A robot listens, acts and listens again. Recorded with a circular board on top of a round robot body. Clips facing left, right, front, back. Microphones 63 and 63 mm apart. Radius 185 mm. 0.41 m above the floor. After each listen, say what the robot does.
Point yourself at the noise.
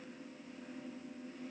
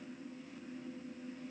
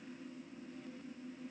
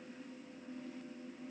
Keep listening.
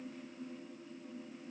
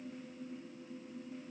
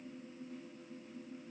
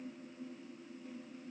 Keep listening.
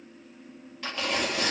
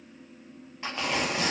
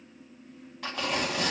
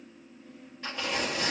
Turn 20° right.
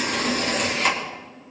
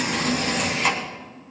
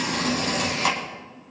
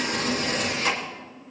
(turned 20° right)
Found it: tearing paper, straight ahead, 2 to 4 m away.